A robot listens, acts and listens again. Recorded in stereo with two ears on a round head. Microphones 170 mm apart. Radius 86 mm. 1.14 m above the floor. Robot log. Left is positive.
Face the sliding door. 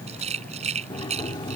note: The sliding door: about 25° left or 155° left.
cmd yaw +25
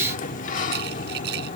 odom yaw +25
note: So it is at 130° left.
cmd yaw +130
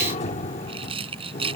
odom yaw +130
note: The sliding door is now 40° left.
cmd yaw +40
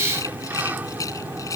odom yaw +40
note: The sliding door is now 10° right.
cmd yaw -10
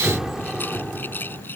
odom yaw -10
end: Facing the sliding door.